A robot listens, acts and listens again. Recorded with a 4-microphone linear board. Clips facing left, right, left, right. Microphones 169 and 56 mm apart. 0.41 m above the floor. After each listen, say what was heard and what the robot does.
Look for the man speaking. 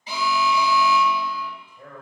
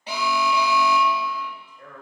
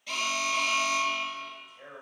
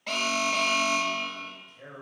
Turn 30° left.
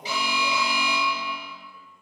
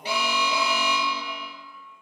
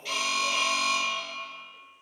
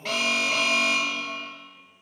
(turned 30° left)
So it is at 140° left. Turn 140° left.
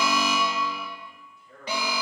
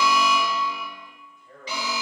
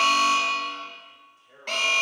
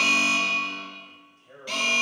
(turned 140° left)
The man speaking is now 55° right. Turn 55° right.
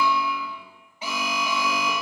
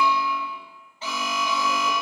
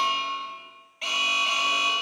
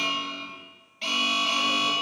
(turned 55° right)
Keep listening.
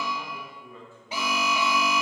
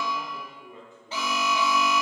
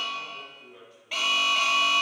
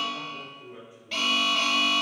The man speaking is now 20° right. Turn 20° right.
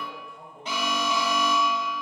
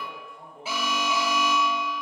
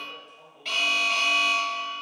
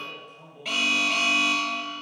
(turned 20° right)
Facing the man speaking.